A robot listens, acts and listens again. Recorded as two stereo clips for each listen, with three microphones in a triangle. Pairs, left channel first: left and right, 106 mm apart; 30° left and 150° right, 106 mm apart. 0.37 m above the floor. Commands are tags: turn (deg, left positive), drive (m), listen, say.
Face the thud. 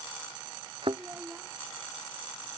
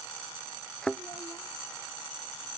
<turn deg="-55"/>
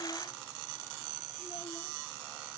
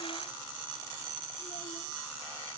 <say>I heard a thud from this way, but can't make it out now.</say>